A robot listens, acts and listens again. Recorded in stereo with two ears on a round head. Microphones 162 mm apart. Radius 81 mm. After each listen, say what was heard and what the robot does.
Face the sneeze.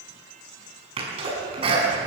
The sneeze: about 35° right or 145° right. Turn 35° right.
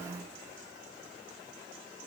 Keep listening.
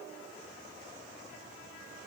I heard a sneeze, but can't make it out now. It was about straight ahead or 110° right.